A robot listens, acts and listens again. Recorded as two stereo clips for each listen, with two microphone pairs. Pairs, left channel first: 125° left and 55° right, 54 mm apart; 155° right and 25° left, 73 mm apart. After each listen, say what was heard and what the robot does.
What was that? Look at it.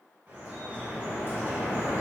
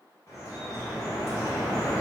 The dripping: 115° right. Turn 115° right.
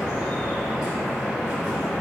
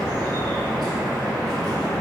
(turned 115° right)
The dripping is now 25° left. Turn 25° left.
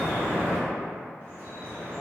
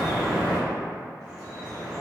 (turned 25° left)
The dripping is now 15° right. Turn 15° right.
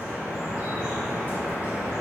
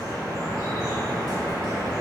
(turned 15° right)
Facing the dripping.